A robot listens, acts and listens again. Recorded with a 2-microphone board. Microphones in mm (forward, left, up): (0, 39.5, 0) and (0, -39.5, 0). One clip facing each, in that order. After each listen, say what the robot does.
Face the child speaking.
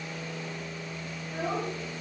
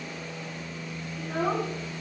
Turn 70° right.
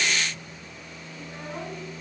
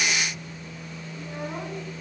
Keep listening.
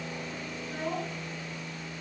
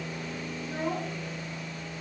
Turn 25° right.
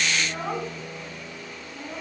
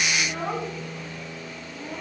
Found it: a child speaking, straight ahead.